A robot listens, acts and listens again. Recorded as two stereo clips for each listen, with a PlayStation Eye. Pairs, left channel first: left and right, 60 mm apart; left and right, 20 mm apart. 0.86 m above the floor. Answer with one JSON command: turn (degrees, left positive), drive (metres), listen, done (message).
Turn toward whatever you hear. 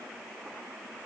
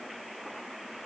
{"listen": true}
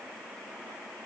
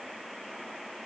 {"listen": true}
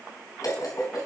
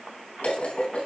{"turn": 90}
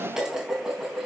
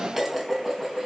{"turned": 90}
{"turn": -10}
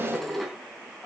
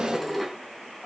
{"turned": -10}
{"done": "Facing the dishes clattering."}